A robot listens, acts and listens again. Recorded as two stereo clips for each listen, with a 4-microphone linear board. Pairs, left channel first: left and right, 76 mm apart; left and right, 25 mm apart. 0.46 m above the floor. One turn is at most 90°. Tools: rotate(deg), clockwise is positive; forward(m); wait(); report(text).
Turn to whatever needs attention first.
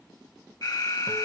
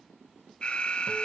rotate(-60)
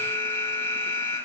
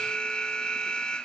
rotate(-35)
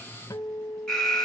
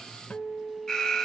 rotate(-10)
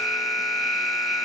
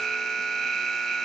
report("Found it: an alarm, straight ahead, 2 to 4 m away.")